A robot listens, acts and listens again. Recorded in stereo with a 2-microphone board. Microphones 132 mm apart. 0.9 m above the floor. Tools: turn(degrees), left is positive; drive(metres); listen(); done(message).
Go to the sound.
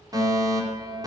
turn(degrees=-30)
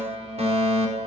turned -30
turn(degrees=-120)
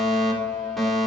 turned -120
drive(metres=1.0)
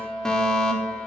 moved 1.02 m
drive(metres=1.0)
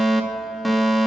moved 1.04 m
drive(metres=1.0)
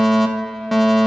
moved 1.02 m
drive(metres=1.0)
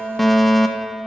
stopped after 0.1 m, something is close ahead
done("I am next to the fire alarm.")